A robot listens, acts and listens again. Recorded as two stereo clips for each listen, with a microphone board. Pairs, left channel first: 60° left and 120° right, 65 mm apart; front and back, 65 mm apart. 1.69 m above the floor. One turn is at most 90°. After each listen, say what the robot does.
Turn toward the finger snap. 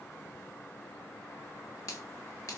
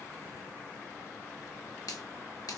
Turn 20° left.
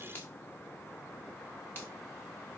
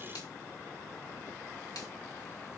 Found it: a finger snap, straight ahead.